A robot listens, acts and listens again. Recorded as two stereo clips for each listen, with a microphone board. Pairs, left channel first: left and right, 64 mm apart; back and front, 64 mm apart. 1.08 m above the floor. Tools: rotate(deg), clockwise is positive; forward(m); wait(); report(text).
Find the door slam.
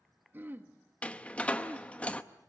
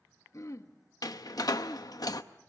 rotate(-160)
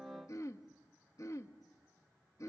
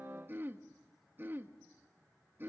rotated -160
report("Facing where the door slam came from. I can't hear it now.")